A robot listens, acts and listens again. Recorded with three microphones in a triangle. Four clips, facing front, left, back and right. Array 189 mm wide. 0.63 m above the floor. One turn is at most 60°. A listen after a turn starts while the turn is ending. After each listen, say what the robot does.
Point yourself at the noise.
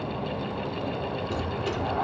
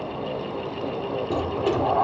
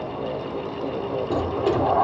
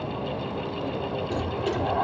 Turn 60° left.
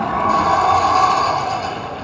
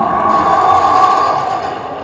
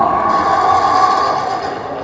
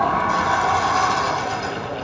Turn 60° left.
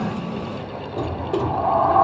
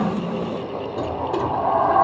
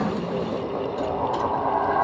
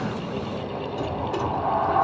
Turn 35° left.
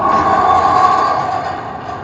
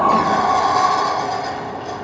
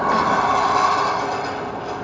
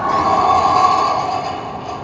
Turn 15° right.
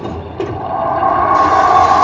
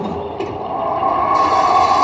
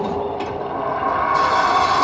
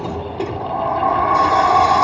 Facing the sliding door.